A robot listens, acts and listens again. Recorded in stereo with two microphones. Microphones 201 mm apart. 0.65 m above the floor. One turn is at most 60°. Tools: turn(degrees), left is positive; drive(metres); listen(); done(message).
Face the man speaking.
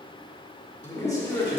turn(degrees=20)
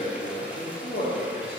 turn(degrees=60)
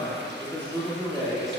done("Found it: a man speaking, straight ahead, 1 to 2 m away.")